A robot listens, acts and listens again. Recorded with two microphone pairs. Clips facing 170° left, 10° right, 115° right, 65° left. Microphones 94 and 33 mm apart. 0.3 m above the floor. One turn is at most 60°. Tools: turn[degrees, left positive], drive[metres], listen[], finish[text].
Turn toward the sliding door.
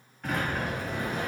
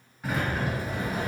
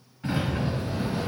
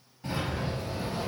Thought: The sliding door: 90° right.
Action: turn[-60]
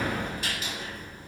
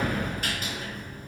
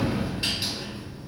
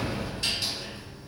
Thought: The sliding door is now 45° right.
Action: turn[-45]
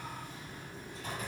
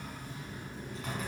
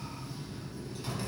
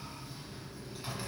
Thought: The sliding door is now 10° right.
Action: turn[-10]
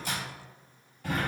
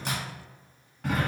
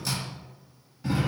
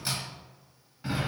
Action: finish[Found it: a sliding door, straight ahead.]